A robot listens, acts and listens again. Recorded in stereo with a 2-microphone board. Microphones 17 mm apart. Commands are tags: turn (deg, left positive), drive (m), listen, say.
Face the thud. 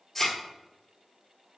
<turn deg="25"/>
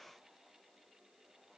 <listen/>
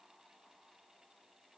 <say>I heard a thud, but can't make it out now. It was about straight ahead or 130° left.</say>